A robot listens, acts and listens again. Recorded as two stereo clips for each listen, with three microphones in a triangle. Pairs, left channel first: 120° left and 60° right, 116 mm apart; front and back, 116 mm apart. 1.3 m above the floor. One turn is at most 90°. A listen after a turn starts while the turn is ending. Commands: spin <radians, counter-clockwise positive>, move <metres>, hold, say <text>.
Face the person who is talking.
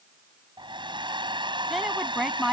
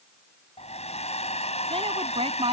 spin -1.57
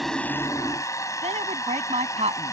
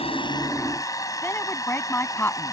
spin -1.22
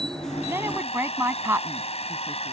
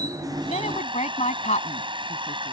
spin 0.17
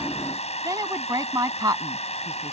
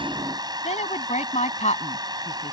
say Facing the woman speaking.